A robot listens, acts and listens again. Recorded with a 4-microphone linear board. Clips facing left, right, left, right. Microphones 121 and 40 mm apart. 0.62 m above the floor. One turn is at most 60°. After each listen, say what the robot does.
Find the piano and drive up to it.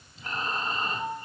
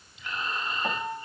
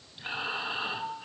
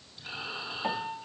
Turn 60° right.
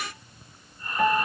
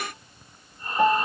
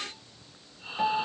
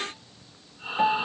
Turn 25° right.
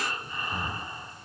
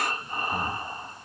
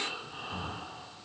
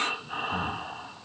Keep listening.
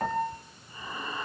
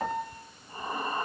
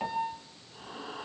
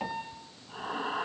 Drive 1.0 m forward.
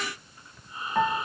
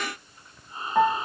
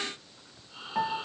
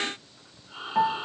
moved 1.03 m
Turn 15° right.
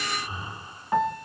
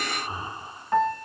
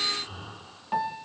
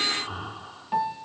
Drive 1.0 m forward.
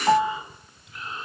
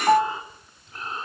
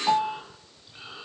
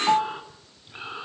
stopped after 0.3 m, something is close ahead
Arrived at the piano, straight ahead.